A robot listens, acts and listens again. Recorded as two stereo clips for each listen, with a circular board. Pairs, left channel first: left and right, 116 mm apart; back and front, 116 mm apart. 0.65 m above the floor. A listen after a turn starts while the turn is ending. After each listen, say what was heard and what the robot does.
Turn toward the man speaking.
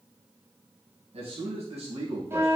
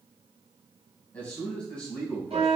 The man speaking: 95° right. Turn 95° right.
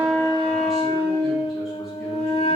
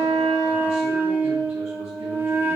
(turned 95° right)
Keep listening.
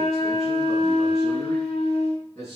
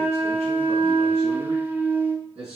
Found it: a man speaking, straight ahead.